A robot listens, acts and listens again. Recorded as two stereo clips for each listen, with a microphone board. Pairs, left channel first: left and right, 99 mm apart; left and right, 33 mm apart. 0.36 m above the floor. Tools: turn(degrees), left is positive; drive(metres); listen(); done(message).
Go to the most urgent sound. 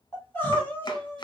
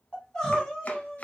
turn(degrees=20)
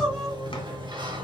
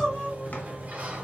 drive(metres=1.0)
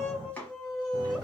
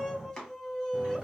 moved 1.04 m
drive(metres=1.0)
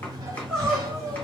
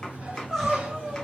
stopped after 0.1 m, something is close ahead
done("Arrived at the crying, straight ahead.")